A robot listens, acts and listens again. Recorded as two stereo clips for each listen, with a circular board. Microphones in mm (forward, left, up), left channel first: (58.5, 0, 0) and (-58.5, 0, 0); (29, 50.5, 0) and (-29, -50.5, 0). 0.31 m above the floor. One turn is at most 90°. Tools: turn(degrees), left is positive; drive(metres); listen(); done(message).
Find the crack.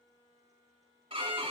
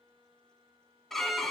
listen()
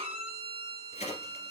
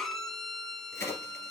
done("Found it: a crack, straight ahead, 2 to 4 m away.")